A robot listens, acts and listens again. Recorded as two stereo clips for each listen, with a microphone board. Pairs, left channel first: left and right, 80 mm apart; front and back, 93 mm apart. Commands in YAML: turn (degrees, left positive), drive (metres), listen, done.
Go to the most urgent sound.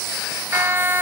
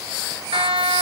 turn: -155
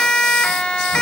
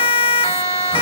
turn: 10
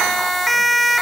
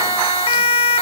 drive: 1.0
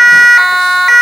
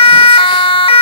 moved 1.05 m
drive: 1.0
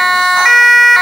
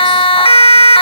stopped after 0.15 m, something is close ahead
done: "I am next to the siren."